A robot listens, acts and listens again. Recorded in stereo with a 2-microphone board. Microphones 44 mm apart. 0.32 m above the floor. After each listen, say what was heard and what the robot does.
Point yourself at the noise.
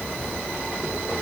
Keep listening.
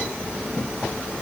Keep listening.
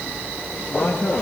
The man speaking: about 50° left or 130° left. Turn 50° left.
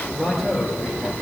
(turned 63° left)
So it is at 10° right. Turn 10° right.
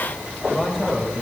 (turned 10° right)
Facing the man speaking.